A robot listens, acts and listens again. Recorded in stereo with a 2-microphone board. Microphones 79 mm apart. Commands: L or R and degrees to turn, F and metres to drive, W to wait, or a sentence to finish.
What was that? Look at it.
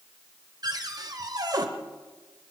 R50
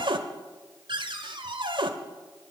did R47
R80
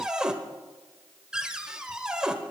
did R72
R10
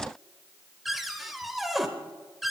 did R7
Found it: a cupboard door, straight ahead.